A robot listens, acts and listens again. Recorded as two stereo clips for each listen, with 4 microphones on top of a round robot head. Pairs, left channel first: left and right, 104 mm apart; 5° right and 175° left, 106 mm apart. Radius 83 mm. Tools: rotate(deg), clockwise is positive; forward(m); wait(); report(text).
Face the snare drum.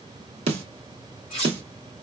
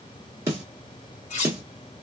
rotate(115)
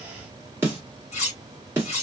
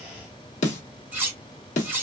rotate(15)
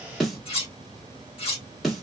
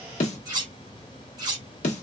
report("Facing the snare drum.")